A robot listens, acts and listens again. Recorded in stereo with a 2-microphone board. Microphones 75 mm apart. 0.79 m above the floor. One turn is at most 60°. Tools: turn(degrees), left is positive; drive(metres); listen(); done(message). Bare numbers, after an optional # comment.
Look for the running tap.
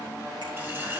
# The running tap: about 30° right or 150° right.
turn(-30)
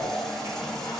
done("Found it: a running tap, straight ahead.")